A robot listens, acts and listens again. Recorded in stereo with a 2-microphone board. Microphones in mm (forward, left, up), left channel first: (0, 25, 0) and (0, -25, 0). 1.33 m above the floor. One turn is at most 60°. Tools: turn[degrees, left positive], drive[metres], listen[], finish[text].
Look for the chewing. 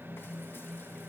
Action: listen[]
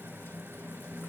Action: listen[]
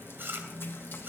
Thought: The chewing: about 45° right or 135° right.
Action: turn[-45]
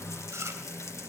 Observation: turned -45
Thought: So it is at 90° right.
Action: turn[-60]
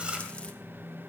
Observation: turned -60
Thought: The chewing is now 25° right.
Action: turn[-25]
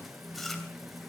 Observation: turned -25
Action: finish[Found it: chewing, straight ahead, 2 to 4 m away.]